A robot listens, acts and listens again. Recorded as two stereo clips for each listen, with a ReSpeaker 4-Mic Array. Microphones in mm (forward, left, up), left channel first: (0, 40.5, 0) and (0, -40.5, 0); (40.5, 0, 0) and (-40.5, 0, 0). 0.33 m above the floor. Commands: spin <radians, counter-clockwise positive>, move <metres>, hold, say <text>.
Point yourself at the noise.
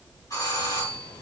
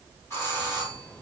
spin 0.87
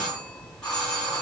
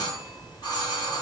spin 0.17
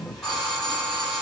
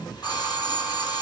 say Facing the doorbell, 2 to 4 m away.